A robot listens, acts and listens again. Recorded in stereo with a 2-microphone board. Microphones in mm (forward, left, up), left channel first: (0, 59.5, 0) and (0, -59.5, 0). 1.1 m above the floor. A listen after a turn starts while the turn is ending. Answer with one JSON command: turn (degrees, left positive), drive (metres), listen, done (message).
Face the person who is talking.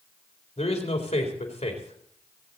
{"turn": 75}
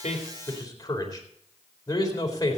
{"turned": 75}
{"turn": 35}
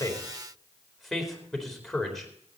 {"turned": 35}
{"done": "Facing the man speaking."}